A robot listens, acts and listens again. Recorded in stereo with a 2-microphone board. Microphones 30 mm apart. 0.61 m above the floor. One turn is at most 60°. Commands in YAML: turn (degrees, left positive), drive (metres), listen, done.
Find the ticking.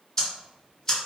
turn: 20
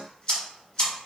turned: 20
turn: 60
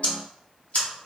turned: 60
turn: 60
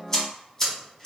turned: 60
turn: 20
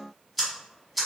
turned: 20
done: "Facing the ticking, 1 to 2 m away."